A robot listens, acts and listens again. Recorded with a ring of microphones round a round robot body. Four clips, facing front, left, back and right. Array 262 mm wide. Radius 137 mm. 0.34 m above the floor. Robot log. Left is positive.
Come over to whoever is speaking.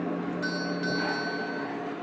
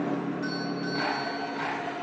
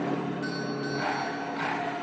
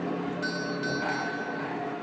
cmd idle
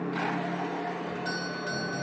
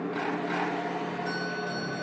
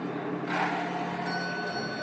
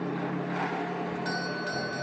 cmd idle
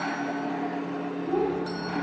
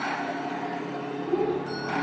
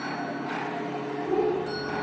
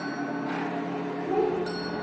note: The child speaking: 125° right.
cmd yaw -125
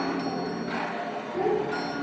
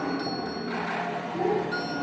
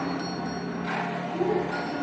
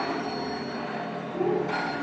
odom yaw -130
cmd fwd 1.0
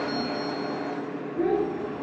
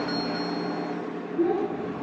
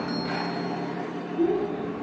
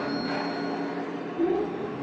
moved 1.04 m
note: The child speaking is now 10° left.
cmd yaw +10
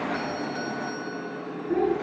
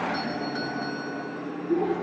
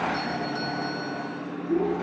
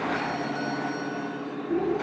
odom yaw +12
cmd fwd 1.0
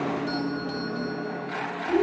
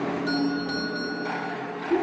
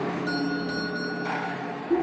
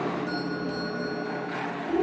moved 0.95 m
cmd fwd 1.0
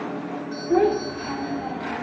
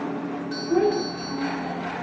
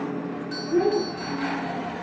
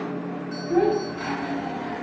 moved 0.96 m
cmd fwd 1.0
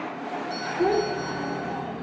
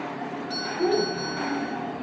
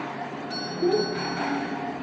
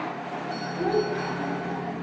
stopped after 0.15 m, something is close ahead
note: The child speaking is now 10° right.
cmd yaw -10
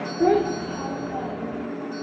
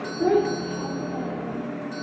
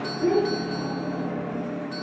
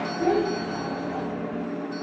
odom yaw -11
end: Arrived at the child speaking, straight ahead.